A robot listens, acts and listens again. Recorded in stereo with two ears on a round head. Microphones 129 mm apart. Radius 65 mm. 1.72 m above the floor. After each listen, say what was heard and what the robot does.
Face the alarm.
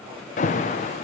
The alarm: about 50° left or 130° left. Turn 50° left.
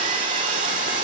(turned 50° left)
Keep listening.
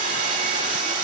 Keep listening.
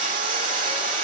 I heard an alarm, but can't make it out now. It was about straight ahead or 80° left.